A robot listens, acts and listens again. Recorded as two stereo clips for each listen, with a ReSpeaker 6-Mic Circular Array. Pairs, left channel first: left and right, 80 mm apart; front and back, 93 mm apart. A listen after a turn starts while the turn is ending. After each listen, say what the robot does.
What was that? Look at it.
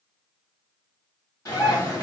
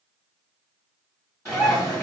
Turn 50° left.
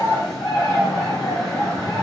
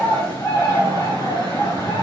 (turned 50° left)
Facing the bird.